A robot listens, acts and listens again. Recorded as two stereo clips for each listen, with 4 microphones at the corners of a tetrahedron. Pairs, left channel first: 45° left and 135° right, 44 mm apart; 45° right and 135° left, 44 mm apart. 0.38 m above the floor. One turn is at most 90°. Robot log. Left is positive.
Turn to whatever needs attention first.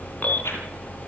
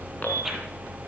end: Facing the alarm.